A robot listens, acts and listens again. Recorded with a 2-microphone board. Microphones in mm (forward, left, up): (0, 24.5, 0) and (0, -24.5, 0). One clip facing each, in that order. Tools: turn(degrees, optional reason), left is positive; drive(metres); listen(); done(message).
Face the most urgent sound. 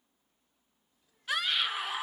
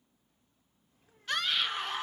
turn(degrees=30)
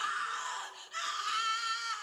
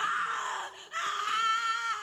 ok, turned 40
turn(degrees=-35, reason="So it is at 35° right.")
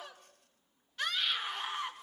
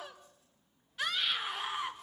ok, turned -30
done("Found it: a scream, straight ahead.")